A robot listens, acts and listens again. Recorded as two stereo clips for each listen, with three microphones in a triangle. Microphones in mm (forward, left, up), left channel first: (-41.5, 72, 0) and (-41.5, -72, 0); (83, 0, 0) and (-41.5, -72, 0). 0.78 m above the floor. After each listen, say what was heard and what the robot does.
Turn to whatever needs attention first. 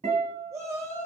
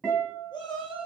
The shout: 25° right. Turn 25° right.
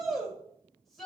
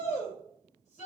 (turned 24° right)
Found it: a shout, straight ahead.